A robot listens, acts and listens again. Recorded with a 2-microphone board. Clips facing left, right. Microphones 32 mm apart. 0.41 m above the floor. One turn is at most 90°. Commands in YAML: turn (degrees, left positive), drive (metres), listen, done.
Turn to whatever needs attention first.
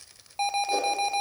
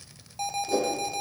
turn: 35
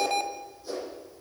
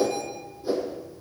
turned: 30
turn: 90
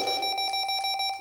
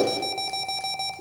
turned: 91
turn: 20
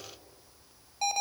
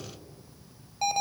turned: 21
done: "Found it: an alarm, straight ahead."